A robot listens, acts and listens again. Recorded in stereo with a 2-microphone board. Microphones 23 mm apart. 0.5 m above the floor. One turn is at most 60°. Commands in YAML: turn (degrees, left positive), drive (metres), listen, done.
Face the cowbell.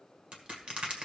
listen: true
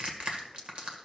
listen: true
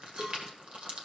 turn: -40
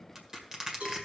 turn: -60
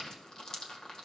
turn: -35
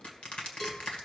listen: true
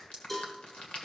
turn: 15
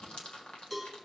done: "Facing the cowbell, 2 to 4 m away."